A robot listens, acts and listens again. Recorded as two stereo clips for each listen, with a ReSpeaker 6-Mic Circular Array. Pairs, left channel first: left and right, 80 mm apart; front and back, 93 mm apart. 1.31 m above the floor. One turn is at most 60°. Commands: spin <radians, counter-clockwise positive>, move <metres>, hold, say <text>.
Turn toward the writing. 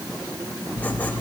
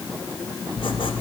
spin 0.26
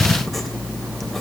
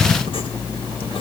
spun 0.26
say Found it: writing, straight ahead.